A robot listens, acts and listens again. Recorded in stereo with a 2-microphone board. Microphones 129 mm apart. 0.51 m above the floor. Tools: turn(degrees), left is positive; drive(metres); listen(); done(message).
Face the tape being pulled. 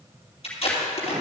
turn(degrees=50)
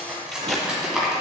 done("Found it: tape being pulled, straight ahead, 2 to 4 m away.")